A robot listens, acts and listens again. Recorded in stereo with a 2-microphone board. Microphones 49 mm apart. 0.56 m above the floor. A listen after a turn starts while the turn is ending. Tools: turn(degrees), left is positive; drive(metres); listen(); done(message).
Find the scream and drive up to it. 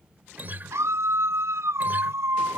turn(degrees=-70)
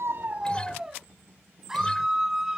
turn(degrees=-10)
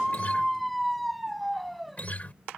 drive(metres=1.0)
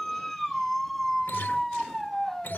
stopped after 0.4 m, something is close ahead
done("Blocked. The scream is further on, straight ahead.")